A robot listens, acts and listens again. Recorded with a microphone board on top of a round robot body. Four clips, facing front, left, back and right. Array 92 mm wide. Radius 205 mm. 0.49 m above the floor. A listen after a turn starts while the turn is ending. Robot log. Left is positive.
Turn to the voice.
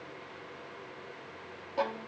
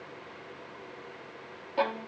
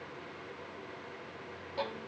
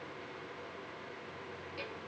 cmd idle
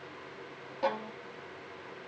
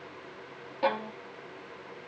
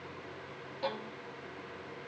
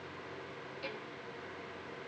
cmd idle
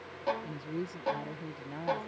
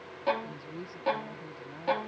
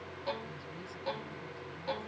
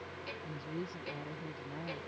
end: Facing the woman speaking.